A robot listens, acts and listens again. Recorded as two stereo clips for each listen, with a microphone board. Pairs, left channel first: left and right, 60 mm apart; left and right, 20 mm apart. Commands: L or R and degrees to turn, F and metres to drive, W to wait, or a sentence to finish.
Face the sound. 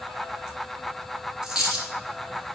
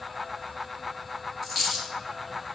R30
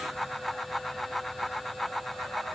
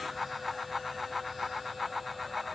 W
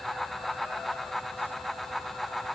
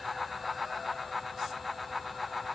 I heard a dropped coin, but can't make it out now. It was about 20° left or 140° right.